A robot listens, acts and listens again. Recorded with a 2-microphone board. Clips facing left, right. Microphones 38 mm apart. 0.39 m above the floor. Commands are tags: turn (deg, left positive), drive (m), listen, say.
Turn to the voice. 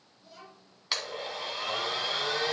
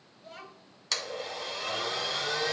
<turn deg="-45"/>
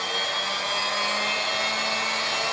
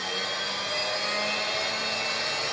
<listen/>
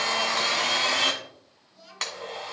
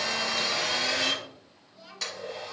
<turn deg="-10"/>
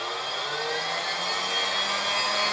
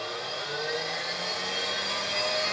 <listen/>
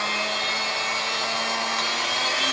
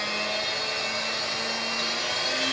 <listen/>
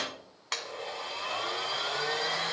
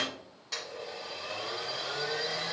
<say>Facing where the child speaking came from. I can't hear it now.</say>